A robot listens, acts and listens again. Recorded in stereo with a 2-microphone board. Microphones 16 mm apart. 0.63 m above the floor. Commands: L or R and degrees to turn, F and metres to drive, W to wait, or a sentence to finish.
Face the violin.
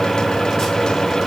W
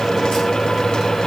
W
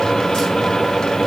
I can't make out a violin to turn to.